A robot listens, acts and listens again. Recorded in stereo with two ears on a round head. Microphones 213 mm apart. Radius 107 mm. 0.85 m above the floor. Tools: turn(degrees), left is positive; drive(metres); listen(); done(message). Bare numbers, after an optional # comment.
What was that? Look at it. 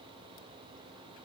listen()
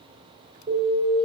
# The alarm: about 15° right or 165° right.
turn(-15)
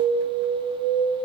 done("Facing the alarm.")